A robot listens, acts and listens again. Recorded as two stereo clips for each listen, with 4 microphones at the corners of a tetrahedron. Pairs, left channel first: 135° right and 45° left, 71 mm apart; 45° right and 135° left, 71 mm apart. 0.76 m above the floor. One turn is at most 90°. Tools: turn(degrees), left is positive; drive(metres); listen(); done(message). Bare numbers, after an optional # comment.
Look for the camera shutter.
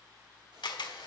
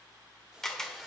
# The camera shutter: 130° right.
turn(-90)
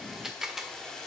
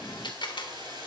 # The camera shutter is now 40° right.
turn(-40)
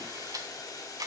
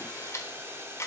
# The camera shutter is now 10° left.
turn(10)
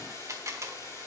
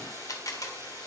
done("Facing the camera shutter.")